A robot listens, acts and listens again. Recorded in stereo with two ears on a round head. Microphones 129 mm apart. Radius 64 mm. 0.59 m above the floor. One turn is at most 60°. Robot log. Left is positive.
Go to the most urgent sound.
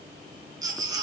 note: The baby crying: about 25° right or 155° right.
cmd yaw -25
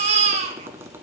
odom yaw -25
note: So it is at 130° right.
cmd yaw -60
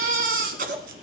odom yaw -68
note: The baby crying is now 60° right.
cmd yaw -60
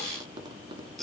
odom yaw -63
cmd fwd 1.0
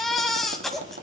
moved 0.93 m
cmd fwd 1.0
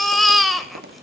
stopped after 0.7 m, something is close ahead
end: I am next to the baby crying.